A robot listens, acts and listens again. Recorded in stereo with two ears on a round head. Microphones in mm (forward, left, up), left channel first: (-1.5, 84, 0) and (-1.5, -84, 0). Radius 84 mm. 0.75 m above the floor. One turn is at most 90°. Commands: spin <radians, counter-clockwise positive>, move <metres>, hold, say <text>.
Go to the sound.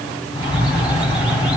spin -0.52
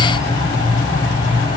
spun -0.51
spin 0.44
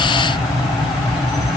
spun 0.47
move 1.0
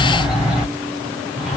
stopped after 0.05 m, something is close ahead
say Something is in my way. I am facing the bird but have not reached it.